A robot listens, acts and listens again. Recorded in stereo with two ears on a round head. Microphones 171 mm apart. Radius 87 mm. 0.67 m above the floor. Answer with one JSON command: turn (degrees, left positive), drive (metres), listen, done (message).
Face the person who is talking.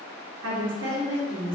{"turn": -65}
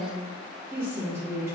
{"turn": -15}
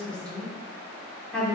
{"done": "Found it: a woman speaking, straight ahead."}